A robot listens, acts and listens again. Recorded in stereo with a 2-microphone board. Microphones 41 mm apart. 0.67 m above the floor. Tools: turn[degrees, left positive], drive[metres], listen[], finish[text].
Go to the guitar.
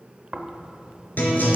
Thought: The guitar: about 45° left or 135° left.
Action: turn[45]
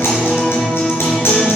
Thought: So it is at 90° left.
Action: turn[90]
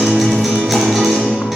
Action: drive[1.0]
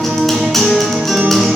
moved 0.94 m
Action: drive[1.0]
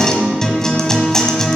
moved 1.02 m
Thought: The guitar is now 10° left.
Action: turn[10]
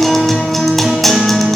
Action: drive[1.0]
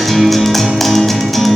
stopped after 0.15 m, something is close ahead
Action: finish[I am next to the guitar.]